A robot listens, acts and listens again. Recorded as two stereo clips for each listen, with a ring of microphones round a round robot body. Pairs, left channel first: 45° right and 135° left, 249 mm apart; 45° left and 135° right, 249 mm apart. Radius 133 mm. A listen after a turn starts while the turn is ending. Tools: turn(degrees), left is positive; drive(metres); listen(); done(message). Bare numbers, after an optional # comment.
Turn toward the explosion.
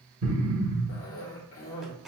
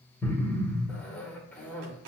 # The explosion: 125° left.
turn(125)
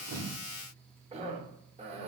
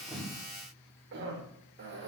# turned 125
done("Facing where the explosion came from. I can't hear it now.")